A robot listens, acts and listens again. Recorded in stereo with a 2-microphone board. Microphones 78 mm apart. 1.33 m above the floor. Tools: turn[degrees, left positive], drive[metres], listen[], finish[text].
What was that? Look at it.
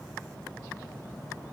Action: listen[]
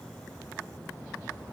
Action: listen[]
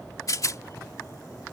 Thought: The rattle: about 45° left or 135° left.
Action: turn[45]
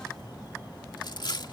Thought: So it is at 85° left.
Action: turn[85]
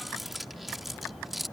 Action: finish[Found it: a rattle, straight ahead.]